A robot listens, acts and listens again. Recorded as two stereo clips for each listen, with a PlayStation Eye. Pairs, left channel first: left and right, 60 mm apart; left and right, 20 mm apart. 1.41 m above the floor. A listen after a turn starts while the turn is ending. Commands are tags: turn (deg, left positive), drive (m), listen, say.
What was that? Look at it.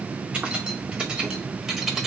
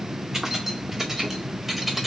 <turn deg="-30"/>
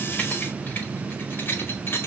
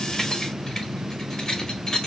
<turn deg="40"/>
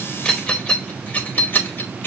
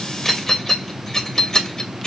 <turn deg="35"/>
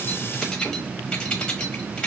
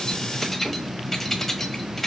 <turn deg="20"/>
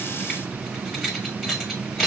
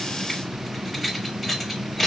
<say>Found it: keys jangling, straight ahead, 1 to 2 m away.</say>